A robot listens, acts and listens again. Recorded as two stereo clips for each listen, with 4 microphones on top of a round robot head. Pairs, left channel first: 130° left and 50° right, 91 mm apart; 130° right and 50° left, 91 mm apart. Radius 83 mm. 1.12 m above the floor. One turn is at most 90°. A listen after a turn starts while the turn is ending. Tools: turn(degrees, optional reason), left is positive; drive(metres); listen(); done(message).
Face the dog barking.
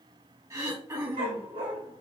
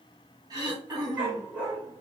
turn(degrees=-25, reason="The dog barking: 25° right.")
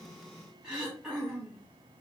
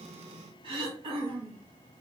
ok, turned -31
turn(degrees=10, reason="Nothing new. It was at 10° left.")
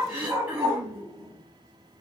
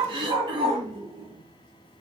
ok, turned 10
turn(degrees=25, reason="The dog barking is now 25° left.")
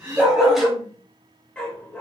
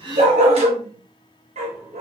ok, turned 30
turn(degrees=55, reason="The dog barking is now 55° left.")
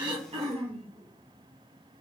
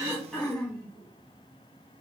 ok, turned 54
listen()
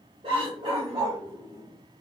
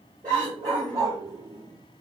done("Facing the dog barking.")